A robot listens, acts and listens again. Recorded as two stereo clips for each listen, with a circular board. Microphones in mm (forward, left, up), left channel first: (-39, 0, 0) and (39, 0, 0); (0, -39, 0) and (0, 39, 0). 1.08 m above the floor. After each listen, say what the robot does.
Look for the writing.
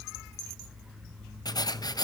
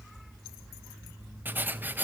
Turn 155° left.
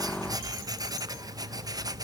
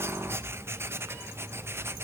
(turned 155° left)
Turn 35° left.
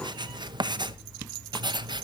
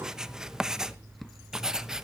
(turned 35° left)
Facing the writing.